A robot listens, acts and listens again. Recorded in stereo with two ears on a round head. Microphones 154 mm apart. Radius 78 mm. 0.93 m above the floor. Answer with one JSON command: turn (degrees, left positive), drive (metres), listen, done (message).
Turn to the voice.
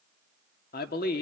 {"turn": 65}
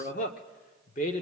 {"turn": 45}
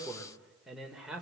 {"done": "Facing the man speaking, 2 to 4 m away."}